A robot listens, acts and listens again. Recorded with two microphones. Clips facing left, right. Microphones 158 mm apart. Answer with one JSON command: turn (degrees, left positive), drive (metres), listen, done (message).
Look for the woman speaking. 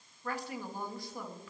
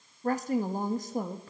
{"turn": -45}
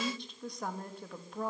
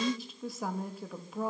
{"done": "Found it: a woman speaking, straight ahead."}